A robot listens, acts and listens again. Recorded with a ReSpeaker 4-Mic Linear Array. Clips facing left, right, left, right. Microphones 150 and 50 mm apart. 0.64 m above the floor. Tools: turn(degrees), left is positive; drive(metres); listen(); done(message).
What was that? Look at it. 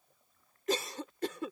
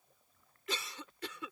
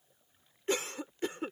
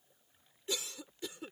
turn(degrees=45)
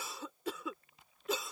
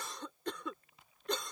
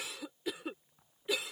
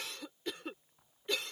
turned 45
done("Facing the cough.")